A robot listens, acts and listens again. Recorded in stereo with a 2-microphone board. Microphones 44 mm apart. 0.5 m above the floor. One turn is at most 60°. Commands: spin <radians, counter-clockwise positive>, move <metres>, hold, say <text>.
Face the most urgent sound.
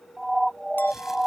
spin -0.52
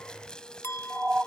spin -1.05
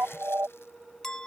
spin -1.05
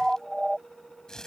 say Facing the siren.